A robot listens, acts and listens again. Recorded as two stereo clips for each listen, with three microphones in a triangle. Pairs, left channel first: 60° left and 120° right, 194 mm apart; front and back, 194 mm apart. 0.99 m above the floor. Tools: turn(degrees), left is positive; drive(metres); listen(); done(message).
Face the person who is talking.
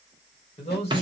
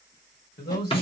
done("Found it: a man speaking, straight ahead.")